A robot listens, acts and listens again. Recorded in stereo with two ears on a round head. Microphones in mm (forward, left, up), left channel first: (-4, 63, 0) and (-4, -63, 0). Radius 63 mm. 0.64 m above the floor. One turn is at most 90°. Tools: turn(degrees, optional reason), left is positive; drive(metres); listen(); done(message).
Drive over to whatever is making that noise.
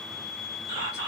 turn(degrees=-35, reason="The whispering: about 35° right or 145° right.")
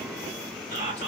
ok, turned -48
turn(degrees=-85, reason="So it is at 85° right.")
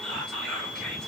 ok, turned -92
drive(metres=1.0)
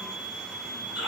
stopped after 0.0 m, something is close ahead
done("Something is in my way. I am facing the whispering but have not reached it.")